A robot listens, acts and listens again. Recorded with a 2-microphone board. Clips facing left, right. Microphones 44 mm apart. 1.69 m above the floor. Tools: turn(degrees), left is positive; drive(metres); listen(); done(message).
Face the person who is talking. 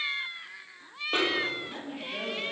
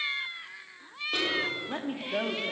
turn(degrees=-55)
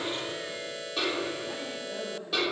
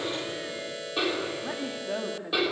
turn(degrees=-75)
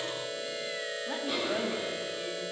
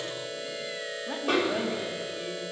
done("Facing the woman speaking, over 4 m away.")